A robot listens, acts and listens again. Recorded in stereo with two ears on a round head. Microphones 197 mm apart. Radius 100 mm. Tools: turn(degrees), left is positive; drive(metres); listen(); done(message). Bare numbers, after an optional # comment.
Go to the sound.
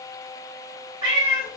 # The cat meowing: about 20° right or 160° right.
turn(-20)
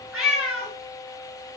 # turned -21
drive(1.0)
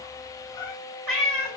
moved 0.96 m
drive(1.0)
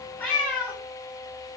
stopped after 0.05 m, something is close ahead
done("Arrived at the cat meowing, straight ahead.")